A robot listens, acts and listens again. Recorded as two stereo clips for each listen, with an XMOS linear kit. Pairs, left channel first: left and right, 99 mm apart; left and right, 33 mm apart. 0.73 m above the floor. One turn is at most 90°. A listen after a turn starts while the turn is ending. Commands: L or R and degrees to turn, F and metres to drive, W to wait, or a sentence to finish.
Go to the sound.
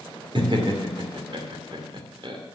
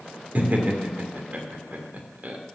R55
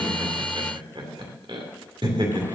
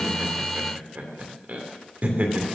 R65
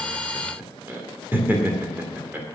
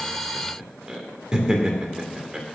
R20
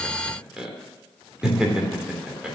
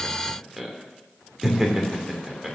R10
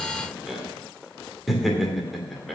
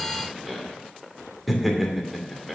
F1.0
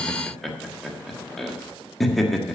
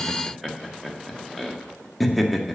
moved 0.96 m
F1.0
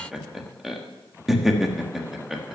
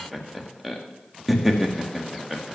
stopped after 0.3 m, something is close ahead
I am next to the laughter.